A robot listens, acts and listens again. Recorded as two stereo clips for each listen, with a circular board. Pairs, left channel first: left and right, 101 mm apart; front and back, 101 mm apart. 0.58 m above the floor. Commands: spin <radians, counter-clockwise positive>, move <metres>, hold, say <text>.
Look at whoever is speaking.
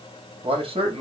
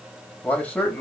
spin -1.31
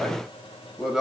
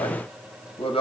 say Found it: a man speaking, straight ahead.